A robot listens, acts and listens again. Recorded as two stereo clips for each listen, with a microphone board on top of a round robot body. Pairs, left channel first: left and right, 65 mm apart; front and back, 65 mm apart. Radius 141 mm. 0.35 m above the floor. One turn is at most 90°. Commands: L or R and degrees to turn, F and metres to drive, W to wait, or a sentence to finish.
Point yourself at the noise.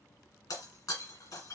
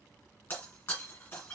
L60
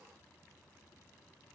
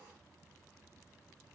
Facing where the breaking glass came from. I can't hear it now.